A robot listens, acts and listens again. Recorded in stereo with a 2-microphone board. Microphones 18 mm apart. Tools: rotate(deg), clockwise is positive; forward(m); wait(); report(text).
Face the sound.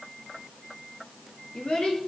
rotate(-65)
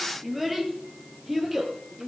rotate(10)
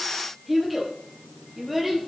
report("Facing the child speaking, over 4 m away.")